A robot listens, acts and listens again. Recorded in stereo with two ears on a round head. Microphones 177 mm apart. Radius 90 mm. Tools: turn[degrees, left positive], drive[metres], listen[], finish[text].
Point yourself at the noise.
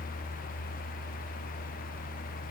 Action: listen[]
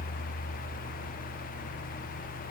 Action: listen[]
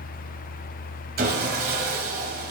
Thought: The sawing: about 55° right or 125° right.
Action: turn[-55]
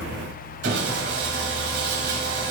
Thought: So it is at 65° right.
Action: turn[-65]
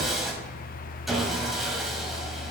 Action: finish[Facing the sawing.]